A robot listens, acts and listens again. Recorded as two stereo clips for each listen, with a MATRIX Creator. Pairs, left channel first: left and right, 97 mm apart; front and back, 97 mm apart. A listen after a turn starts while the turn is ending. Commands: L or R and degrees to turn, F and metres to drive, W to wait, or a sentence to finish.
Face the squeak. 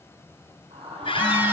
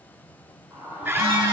L120
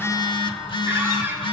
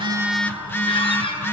R20
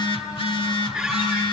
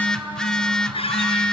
Facing the squeak.